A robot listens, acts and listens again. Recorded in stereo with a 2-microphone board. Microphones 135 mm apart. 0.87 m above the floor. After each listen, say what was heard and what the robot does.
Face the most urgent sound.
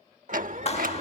The alarm: about 65° right or 115° right. Turn 65° right.
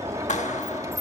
Keep listening.
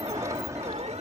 So it is at 50° right. Turn 50° right.
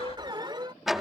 The alarm is now 35° right. Turn 35° right.
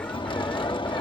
Keep listening.
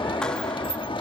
Keep listening.
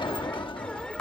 Facing the alarm.